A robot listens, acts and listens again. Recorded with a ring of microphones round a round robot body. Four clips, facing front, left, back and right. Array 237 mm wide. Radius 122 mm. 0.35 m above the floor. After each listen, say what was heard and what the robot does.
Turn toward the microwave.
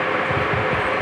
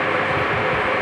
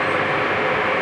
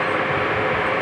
Keep listening.
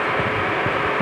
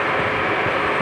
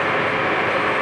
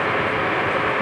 Keep listening.
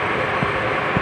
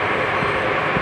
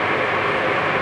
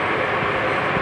I can't make out a microwave.